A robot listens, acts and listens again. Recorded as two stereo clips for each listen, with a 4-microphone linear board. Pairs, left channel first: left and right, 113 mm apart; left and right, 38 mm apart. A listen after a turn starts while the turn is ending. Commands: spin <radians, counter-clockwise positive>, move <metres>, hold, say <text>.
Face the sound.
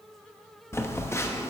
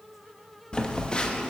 spin 0.44
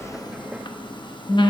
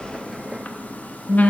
spin 2.18
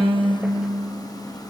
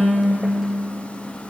hold
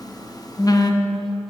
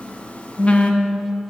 spin 0.70
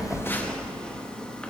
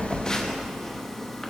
spin 0.17
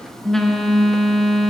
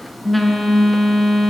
say Found it: a phone buzzing, straight ahead, under 1 m away.